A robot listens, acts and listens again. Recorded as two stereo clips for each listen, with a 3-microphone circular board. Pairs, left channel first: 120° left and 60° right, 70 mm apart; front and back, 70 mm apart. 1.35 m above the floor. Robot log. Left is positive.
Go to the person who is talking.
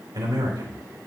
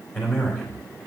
note: The man speaking: 60° right.
cmd yaw -60
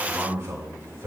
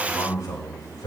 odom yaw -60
cmd fwd 1.0
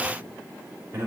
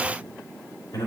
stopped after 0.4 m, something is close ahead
end: Something is in my way. I am facing the man speaking but have not reached it.